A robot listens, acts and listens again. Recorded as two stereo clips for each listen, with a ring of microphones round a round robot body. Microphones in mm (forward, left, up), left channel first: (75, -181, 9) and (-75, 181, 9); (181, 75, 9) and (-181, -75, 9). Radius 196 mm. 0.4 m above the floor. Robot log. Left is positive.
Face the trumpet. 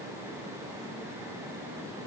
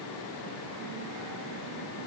cmd idle
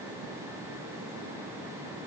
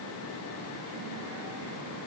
cmd idle
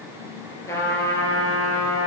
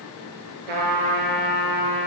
note: The trumpet: 150° right.
cmd yaw -150
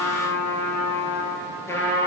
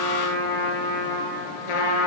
note: The trumpet is now 15° left.
cmd yaw +15
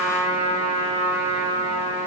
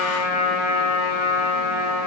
end: Found it: a trumpet, straight ahead.